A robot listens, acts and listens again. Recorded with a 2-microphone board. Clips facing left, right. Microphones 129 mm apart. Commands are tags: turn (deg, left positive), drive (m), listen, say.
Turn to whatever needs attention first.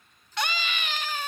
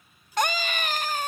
<turn deg="-45"/>
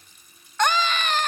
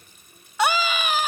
<turn deg="-10"/>
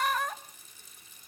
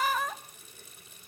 <say>Found it: a scream, straight ahead.</say>